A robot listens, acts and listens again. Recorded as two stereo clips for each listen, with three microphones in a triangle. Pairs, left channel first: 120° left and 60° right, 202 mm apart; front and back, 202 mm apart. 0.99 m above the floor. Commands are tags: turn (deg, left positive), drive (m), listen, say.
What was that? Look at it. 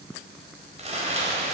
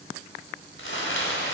<say>Found it: crumpling, straight ahead.</say>